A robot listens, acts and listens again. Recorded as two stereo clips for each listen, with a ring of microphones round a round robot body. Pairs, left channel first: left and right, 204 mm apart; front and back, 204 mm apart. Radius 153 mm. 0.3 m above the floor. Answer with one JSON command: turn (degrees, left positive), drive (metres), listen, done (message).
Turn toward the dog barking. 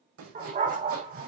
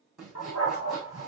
{"turn": -40}
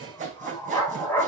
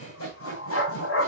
{"turn": 10}
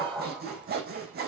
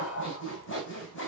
{"done": "Found it: a dog barking, straight ahead."}